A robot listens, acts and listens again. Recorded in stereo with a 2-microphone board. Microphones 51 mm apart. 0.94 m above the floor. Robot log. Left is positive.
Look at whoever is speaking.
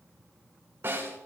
cmd idle
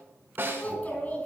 note: The child speaking: about 35° left or 145° left.
cmd yaw +35
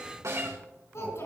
note: So it is at 110° left.
cmd yaw +110
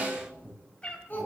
note: The child speaking is now 40° left.
cmd yaw +40
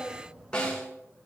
note: The child speaking is now 10° right.
cmd yaw -10
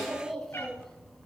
end: Found it: a child speaking, straight ahead.